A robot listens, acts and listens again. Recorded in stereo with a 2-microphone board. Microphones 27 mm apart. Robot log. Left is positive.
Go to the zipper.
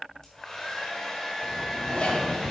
note: The zipper: about 50° left or 130° left.
cmd yaw +50
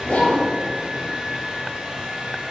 note: So it is at 80° left.
cmd yaw +80
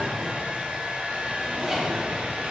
note: The zipper is now 15° right.
cmd yaw -15
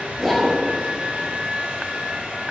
cmd fwd 1.0
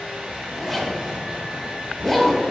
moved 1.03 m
cmd fwd 1.0
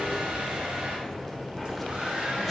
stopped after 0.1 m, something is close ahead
end: Arrived at the zipper, straight ahead.